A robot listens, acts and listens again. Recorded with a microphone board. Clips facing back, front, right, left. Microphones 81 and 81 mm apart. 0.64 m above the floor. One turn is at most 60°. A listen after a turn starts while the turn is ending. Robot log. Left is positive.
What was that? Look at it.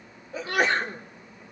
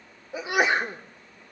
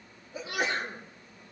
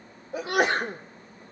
note: The sneeze: 75° left.
cmd yaw +60
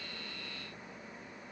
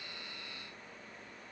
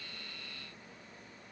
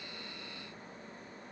note: Nothing new. It was at 15° left.
cmd yaw +15
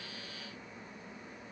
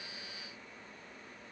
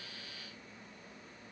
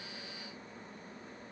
end: I heard a sneeze from this way, but can't make it out now.